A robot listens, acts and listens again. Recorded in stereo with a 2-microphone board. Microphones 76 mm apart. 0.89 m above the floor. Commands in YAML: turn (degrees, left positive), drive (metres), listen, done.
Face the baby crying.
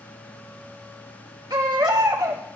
turn: -65
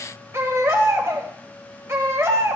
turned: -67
turn: -40
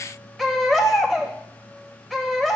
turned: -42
done: "Found it: a baby crying, straight ahead."